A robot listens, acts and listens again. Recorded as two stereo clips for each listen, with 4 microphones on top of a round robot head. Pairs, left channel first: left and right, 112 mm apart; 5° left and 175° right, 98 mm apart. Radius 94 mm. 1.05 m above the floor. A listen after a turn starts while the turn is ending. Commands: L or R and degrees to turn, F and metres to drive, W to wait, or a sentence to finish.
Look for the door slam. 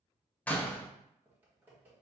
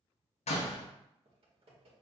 L15
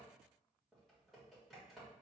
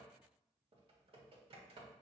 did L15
Facing where the door slam came from. I can't hear it now.